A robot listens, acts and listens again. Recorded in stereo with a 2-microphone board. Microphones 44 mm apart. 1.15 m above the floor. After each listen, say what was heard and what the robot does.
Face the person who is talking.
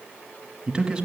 The man speaking: about 15° right or 165° right. Turn 15° right.
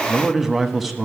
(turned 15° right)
Facing the man speaking, 1 to 2 m away.